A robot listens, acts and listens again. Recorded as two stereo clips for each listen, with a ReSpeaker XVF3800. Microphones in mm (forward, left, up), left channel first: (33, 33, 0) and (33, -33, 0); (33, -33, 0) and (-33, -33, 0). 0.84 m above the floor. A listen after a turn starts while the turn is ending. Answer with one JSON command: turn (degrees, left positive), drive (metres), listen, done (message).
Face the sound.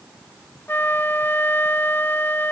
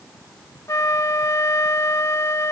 {"turn": 35}
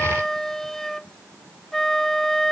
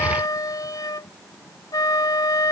{"done": "Found it: a flute, straight ahead."}